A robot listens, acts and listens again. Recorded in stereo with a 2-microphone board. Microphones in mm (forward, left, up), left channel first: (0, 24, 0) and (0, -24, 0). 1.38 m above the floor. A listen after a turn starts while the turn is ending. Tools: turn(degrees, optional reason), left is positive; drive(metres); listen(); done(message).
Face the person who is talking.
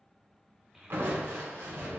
turn(degrees=-30)
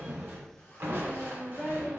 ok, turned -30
turn(degrees=30, reason="So it is at 30° left.")
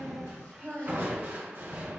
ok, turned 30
turn(degrees=-20, reason="The child speaking is now 20° right.")
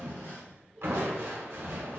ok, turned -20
done("Found it: a child speaking, straight ahead, 1 to 2 m away.")